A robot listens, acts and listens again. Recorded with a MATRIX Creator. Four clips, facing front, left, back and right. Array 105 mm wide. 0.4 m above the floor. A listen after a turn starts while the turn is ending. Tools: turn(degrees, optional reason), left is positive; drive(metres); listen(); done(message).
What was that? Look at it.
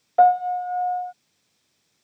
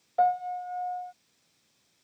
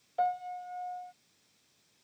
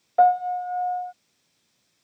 turn(degrees=-30, reason="The piano: 30° right.")
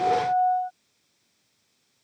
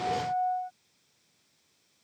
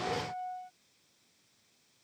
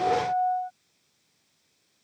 turn(degrees=-15, reason="The piano is now 15° right.")
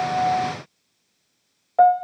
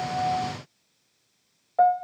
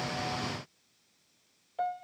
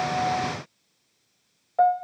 done("Facing the piano.")